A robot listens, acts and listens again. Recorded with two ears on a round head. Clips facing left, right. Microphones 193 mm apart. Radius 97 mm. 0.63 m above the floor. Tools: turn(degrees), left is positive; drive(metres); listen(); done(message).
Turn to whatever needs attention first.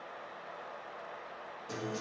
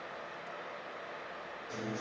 listen()
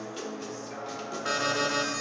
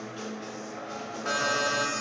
turn(degrees=30)
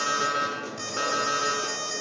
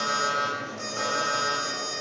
turn(degrees=135)
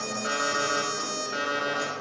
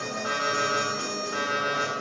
turn(degrees=30)
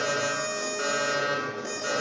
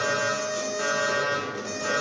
turn(degrees=15)
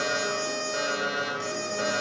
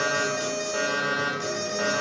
turn(degrees=10)
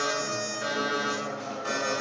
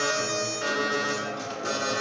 done("Found it: an alarm, straight ahead.")